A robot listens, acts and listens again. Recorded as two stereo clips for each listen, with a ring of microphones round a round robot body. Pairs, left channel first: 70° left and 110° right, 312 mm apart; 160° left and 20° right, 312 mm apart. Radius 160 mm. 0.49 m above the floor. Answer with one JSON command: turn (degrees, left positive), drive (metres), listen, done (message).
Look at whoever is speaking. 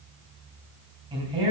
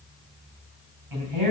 {"turn": -40}
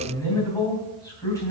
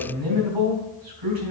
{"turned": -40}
{"turn": -10}
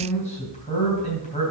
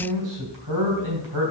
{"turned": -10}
{"done": "Found it: a man speaking, straight ahead, 2 to 4 m away."}